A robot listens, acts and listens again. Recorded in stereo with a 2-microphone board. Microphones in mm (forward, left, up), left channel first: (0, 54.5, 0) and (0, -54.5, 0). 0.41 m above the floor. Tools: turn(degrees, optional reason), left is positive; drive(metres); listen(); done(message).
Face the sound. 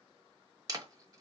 turn(degrees=-35, reason="The camera shutter: about 35° right or 145° right.")
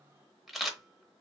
done("Found it: a camera shutter, straight ahead, under 1 m away.")